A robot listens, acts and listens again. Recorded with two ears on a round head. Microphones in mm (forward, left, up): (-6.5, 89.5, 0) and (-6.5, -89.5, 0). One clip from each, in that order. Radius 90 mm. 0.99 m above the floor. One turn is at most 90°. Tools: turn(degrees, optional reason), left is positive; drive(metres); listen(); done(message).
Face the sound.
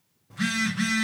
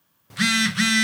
turn(degrees=-90)
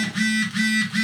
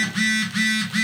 turn(degrees=-10, reason="So it is at 10° right.")
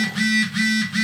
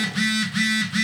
done("Found it: a phone buzzing, straight ahead, under 1 m away.")